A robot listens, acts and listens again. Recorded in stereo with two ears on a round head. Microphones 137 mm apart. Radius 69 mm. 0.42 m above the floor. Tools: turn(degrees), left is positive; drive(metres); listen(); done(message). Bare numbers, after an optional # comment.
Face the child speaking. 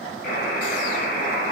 listen()
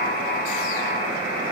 listen()
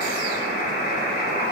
done("I can't make out a child speaking, only a buzzer.")